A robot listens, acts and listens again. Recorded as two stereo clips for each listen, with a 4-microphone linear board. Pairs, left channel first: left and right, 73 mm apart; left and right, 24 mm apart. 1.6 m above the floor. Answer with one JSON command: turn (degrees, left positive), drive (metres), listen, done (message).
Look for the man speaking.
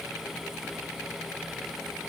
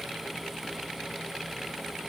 {"listen": true}
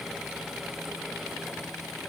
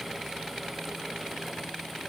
{"listen": true}
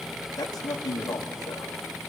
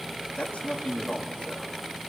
{"turn": 65}
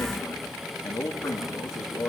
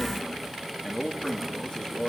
{"turn": 50}
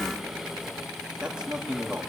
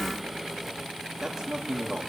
{"turn": -15}
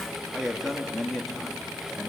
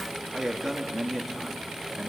{"done": "Found it: a man speaking, straight ahead."}